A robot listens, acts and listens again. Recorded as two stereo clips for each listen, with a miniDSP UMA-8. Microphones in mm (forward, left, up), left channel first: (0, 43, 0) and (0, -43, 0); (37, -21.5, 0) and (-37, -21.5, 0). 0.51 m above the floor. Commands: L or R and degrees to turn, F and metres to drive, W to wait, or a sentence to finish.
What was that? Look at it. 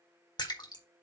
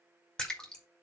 L75
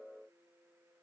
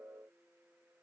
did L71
I heard a splash from this way, but can't make it out now.